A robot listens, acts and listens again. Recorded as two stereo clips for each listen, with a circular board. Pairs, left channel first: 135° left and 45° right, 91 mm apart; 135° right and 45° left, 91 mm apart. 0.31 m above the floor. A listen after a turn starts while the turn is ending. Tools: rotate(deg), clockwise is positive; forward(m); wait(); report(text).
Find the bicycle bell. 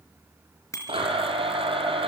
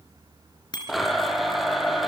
rotate(170)
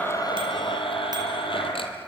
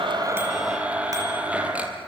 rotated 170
wait()
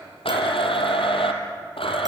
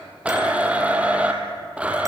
wait()
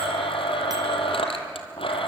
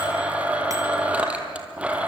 report("I heard a bicycle bell from this way, but can't make it out now.")